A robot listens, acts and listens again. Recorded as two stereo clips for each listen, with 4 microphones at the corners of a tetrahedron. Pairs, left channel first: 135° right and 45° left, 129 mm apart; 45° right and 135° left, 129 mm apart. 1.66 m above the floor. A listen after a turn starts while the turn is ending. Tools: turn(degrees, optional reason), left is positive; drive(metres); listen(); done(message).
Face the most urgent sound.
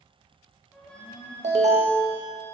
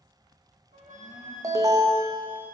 turn(degrees=70, reason="The alarm: 70° left.")
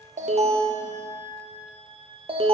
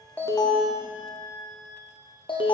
done("Facing the alarm.")